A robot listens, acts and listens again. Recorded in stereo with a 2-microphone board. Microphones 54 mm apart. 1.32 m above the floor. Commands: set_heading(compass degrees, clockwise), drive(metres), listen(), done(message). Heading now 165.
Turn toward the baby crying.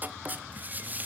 listen()
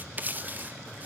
listen()
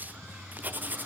done("I can't make out a baby crying, only writing.")